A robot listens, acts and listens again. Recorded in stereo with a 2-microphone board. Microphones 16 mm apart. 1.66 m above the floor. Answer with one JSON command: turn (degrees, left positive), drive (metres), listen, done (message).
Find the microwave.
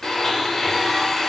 {"listen": true}
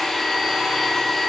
{"listen": true}
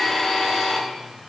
{"done": "I can't make out a microwave to turn to."}